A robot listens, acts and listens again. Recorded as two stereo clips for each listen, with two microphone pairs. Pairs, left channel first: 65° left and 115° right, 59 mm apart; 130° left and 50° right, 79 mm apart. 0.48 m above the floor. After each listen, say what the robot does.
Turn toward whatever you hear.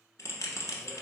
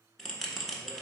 Turn 45° left.
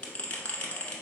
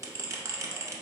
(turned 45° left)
Found it: a bell, straight ahead, 1 to 2 m away.